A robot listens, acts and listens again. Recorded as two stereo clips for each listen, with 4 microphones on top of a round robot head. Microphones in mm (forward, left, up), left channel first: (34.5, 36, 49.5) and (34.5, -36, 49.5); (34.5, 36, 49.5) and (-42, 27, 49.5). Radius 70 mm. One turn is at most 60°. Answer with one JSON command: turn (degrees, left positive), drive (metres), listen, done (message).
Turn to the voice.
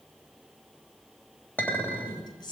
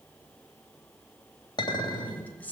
{"turn": 60}
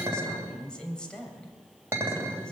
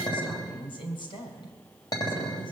{"turn": 10}
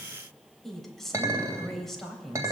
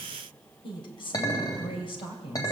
{"done": "Found it: a woman speaking, straight ahead, 2 to 4 m away."}